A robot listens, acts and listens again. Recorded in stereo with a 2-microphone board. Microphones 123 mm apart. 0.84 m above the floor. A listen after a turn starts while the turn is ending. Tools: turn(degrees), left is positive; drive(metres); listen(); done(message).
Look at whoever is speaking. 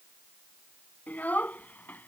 turn(degrees=30)
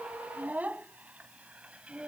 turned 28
turn(degrees=-10)
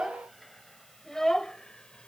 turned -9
done("Found it: a child speaking, straight ahead.")